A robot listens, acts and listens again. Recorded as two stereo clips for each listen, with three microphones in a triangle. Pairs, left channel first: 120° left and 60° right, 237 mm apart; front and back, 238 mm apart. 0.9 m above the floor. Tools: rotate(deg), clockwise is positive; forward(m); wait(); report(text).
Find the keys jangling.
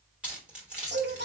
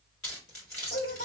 rotate(-25)
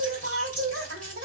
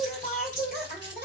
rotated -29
wait()
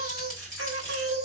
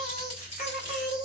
report("Found it: keys jangling, straight ahead, 2 to 4 m away.")